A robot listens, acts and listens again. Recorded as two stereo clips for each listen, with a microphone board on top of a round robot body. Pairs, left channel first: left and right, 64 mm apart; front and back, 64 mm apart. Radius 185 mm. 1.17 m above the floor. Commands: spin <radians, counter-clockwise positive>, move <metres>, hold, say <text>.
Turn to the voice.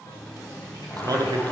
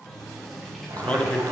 spin -1.22
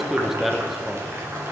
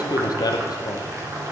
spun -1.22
say Facing the man speaking.